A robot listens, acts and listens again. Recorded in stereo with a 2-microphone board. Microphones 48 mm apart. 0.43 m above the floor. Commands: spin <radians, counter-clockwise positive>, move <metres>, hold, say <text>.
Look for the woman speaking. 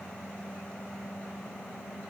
hold
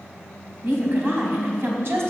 spin -1.05
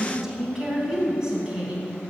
spin -0.26
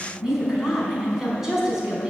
spin -0.17
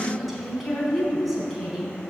say Facing the woman speaking.